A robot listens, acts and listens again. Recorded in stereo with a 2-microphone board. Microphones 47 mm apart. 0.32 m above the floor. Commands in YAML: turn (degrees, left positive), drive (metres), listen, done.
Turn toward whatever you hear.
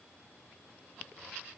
listen: true
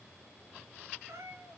turn: -70
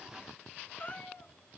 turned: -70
turn: 35
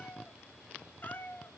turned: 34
turn: 45
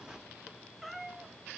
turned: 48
done: "Facing the cat meowing."